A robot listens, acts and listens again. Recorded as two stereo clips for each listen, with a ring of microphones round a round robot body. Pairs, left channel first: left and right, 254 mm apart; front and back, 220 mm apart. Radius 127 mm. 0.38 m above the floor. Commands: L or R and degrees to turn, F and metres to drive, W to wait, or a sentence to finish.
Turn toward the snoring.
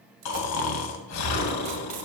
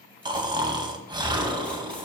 L110
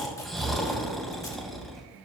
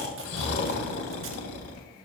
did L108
Found it: snoring, straight ahead.